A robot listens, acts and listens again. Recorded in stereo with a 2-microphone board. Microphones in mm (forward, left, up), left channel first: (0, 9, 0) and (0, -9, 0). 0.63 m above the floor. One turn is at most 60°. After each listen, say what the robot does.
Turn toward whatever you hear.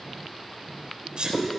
Turn 60° right.
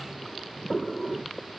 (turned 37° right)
Keep listening.
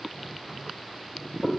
I heard a sneeze, but can't make it out now. It was about 25° right or 80° right.